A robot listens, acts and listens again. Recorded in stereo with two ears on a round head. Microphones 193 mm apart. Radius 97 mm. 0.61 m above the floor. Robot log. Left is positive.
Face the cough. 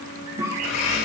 cmd yaw -30
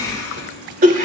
note: So it is at 135° right.
cmd yaw -135
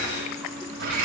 cmd idle
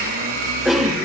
end: Found it: a cough, straight ahead.